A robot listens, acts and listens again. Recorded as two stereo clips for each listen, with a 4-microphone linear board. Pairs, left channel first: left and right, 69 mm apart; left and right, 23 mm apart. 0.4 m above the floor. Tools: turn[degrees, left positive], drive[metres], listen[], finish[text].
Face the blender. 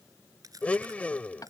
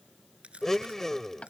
Thought: The blender: about 20° left or 160° left.
Action: turn[20]
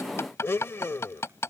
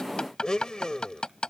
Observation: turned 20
Thought: So it is at 140° left.
Action: turn[140]
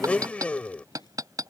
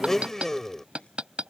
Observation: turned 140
Thought: The blender is now 25° left.
Action: turn[25]
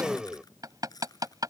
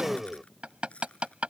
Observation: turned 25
Thought: The blender is now 10° right.
Action: turn[-10]
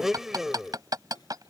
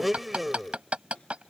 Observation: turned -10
Action: finish[Facing the blender.]